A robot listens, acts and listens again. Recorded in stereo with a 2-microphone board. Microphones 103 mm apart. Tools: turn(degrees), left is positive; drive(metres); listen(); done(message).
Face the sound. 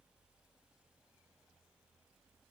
listen()
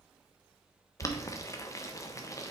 turn(degrees=30)
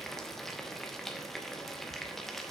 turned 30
done("Found it: boiling, straight ahead.")